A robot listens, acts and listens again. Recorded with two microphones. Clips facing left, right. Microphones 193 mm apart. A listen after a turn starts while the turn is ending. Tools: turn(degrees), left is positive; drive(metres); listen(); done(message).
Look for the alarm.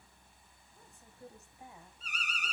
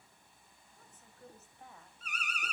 turn(degrees=-60)
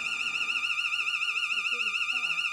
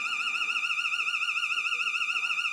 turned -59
turn(degrees=-60)
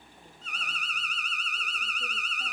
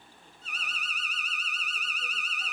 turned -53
done("Found it: an alarm, straight ahead, over 4 m away.")